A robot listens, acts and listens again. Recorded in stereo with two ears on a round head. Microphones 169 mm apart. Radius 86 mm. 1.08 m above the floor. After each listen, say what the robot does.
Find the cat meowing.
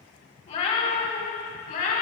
Turn 50° left.
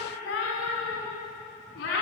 Turn 60° left.
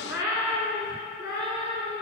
Turn 20° right.
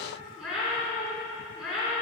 Facing the cat meowing.